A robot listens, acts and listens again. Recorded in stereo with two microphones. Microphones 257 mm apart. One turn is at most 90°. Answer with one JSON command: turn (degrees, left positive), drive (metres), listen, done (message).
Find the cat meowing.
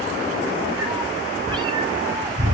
{"turn": -15}
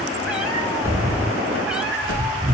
{"done": "Facing the cat meowing."}